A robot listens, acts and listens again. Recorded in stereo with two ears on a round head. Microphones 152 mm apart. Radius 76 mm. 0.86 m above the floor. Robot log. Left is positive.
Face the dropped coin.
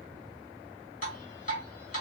cmd idle
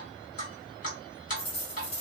note: The dropped coin: about 40° left or 140° left.
cmd yaw +40
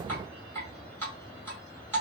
cmd idle
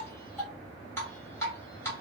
end: I heard a dropped coin, but can't make it out now. It was about straight ahead or 100° left.